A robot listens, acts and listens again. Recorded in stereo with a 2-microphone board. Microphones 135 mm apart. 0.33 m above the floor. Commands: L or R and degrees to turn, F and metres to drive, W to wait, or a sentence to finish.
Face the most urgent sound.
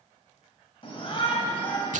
L45
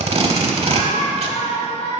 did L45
L75
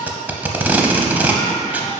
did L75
L35
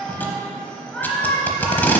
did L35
Found it: a shout, straight ahead, 1 to 2 m away.